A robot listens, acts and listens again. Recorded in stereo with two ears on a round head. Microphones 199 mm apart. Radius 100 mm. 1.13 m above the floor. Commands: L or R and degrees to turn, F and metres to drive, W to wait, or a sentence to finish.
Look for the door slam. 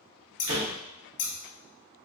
R70
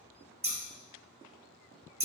W
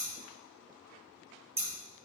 I heard a door slam, but can't make it out now. It was about straight ahead or 40° right.